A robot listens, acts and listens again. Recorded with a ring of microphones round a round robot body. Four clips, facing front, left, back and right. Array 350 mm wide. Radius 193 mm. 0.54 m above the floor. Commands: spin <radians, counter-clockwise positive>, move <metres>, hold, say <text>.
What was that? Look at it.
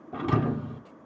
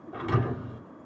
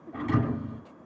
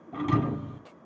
spin -0.44
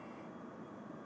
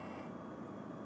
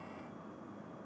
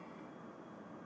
say I heard a thud from this way, but can't make it out now.